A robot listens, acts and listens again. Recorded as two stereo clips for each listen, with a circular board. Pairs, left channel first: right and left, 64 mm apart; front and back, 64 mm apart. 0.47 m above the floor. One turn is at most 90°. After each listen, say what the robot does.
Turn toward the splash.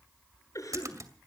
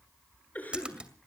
Turn 90° left.
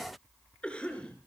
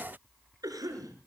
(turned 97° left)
Turn 10° left.
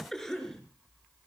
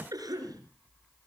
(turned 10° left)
I heard a splash from this way, but can't make it out now.